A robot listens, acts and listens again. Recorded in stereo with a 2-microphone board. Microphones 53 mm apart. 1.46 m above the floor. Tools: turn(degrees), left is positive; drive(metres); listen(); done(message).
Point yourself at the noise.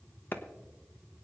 turn(degrees=45)
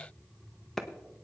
turn(degrees=10)
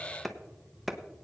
done("Facing the clap.")